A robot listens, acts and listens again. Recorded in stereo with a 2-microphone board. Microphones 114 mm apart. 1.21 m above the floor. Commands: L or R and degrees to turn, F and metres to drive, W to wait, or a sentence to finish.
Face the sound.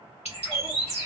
L65
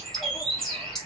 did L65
Facing the bird.